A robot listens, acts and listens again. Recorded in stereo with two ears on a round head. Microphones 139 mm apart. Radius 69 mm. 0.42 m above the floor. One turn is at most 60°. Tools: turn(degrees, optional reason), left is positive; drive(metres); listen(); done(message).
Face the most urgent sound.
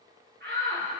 turn(degrees=-60, reason="The shout: about 70° right or 110° right.")
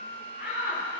turn(degrees=-15, reason="So it is at 15° right.")
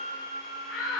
done("Facing the shout.")